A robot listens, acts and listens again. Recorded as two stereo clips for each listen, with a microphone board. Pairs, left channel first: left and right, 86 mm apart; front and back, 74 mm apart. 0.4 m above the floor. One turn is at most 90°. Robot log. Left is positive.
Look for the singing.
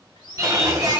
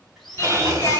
note: The singing: 45° right.
cmd yaw -45
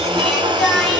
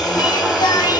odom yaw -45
end: Found it: singing, straight ahead, 1 to 2 m away.